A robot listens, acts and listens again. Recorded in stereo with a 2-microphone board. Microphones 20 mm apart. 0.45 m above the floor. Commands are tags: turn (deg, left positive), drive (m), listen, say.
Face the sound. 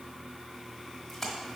<turn deg="30"/>
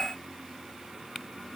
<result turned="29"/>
<listen/>
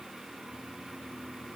<say>I heard a splash, but can't make it out now. It was about 20° right or 145° left.</say>